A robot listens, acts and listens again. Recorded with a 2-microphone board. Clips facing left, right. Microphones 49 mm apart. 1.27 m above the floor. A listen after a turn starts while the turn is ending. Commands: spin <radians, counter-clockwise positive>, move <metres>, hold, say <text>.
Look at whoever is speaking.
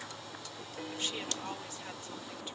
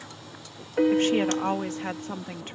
spin -0.87
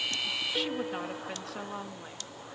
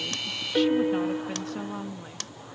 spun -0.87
say Facing the woman speaking.